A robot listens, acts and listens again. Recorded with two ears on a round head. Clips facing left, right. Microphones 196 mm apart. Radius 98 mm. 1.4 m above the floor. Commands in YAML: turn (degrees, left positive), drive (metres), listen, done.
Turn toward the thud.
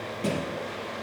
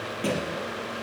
turn: -30
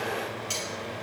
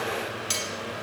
listen: true
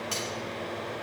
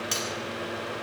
done: "I heard a thud, but can't make it out now. It was about 20° left or 140° right."